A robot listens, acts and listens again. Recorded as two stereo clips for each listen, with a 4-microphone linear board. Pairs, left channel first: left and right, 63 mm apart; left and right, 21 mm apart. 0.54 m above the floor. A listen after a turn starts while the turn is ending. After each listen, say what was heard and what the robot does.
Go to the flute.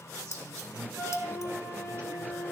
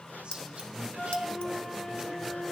The flute: about 40° left or 140° left. Turn 40° left.
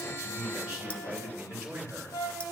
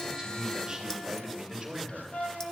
So it is at 95° left. Turn 95° left.
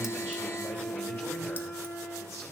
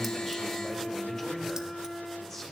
The flute is now 40° left. Turn 40° left.
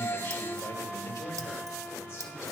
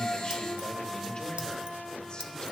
Keep listening.
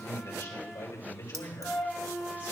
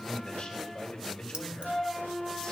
Drive 1.0 m forward.
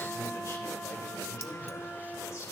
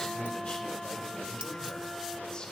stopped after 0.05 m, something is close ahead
Keep listening.
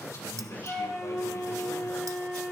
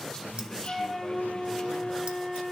The flute is now 10° right. Turn 10° right.
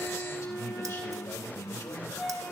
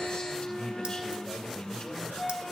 Blocked. The flute is further on, straight ahead.